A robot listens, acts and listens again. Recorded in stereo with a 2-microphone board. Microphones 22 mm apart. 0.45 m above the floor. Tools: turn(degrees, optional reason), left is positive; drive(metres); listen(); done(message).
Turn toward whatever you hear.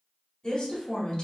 turn(degrees=45, reason="The woman speaking: about 45° left or 135° left.")
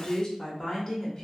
turn(degrees=30, reason="So it is at 30° left.")
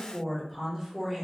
turn(degrees=-10, reason="The woman speaking is now 10° right.")
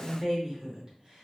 turn(degrees=-25, reason="The woman speaking is now 25° right.")
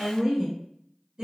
turn(degrees=-40, reason="The woman speaking is now 40° right.")
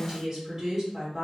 turn(degrees=-15, reason="The woman speaking is now 15° right.")
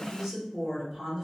done("Found it: a woman speaking, straight ahead.")